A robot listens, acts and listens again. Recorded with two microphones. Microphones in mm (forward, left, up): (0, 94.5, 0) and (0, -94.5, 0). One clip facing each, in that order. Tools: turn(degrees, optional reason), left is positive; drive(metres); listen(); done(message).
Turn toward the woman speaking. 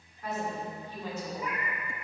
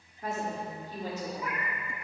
turn(degrees=-35, reason="The woman speaking: about 35° right or 145° right.")
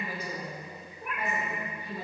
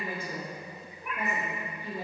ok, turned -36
turn(degrees=-30, reason="The woman speaking: about 30° right or 150° right.")
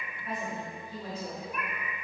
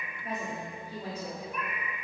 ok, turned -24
turn(degrees=-30, reason="The woman speaking: about 30° right or 150° right.")
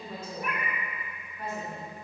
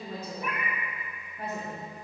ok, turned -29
turn(degrees=-50, reason="The woman speaking: about 50° right or 130° right.")
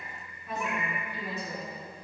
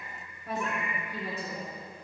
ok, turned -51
turn(degrees=-65, reason="So it is at 65° right.")
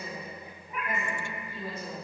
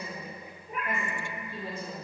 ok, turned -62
turn(degrees=-10, reason="The woman speaking is now 10° right.")
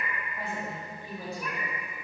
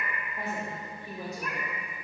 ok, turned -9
done("Facing the woman speaking, 1 to 2 m away.")